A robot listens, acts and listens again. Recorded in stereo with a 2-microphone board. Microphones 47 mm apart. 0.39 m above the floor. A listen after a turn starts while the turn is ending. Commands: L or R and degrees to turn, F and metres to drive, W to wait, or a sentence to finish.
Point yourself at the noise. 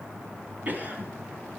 R35
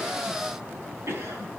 R105
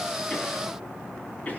W
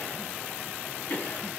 L35
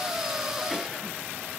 W
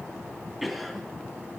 Facing the cough.